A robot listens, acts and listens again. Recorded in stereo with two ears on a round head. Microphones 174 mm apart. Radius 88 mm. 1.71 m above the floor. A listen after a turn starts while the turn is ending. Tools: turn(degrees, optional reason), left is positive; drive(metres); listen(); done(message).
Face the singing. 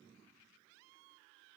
listen()
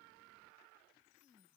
listen()
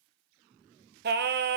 turn(degrees=-55, reason="The singing: about 55° right or 125° right.")
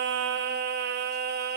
turn(degrees=-60, reason="So it is at 60° right.")
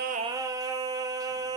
turn(degrees=-20, reason="The singing is now 20° right.")
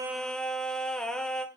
done("Found it: singing, straight ahead, 1 to 2 m away.")